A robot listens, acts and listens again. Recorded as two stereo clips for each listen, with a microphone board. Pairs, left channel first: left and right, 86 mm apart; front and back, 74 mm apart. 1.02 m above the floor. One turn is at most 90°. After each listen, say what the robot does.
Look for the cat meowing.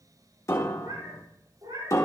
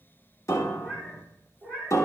Turn 65° right.
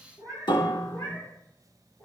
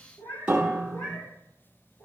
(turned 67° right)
Turn 10° left.
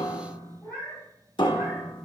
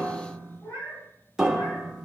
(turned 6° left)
Turn 10° left.
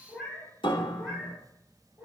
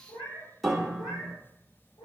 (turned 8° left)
Facing the cat meowing, over 4 m away.